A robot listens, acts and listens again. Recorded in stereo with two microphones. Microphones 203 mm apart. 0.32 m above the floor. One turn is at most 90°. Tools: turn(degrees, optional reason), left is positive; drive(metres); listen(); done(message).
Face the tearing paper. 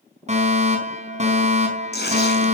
turn(degrees=55, reason="The tearing paper: about 55° left or 125° left.")
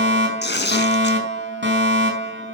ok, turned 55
turn(degrees=65, reason="So it is at 65° left.")
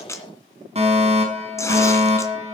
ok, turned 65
turn(degrees=15, reason="The tearing paper is now 15° left.")
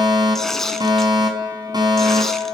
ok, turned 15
done("Facing the tearing paper, 2 to 4 m away.")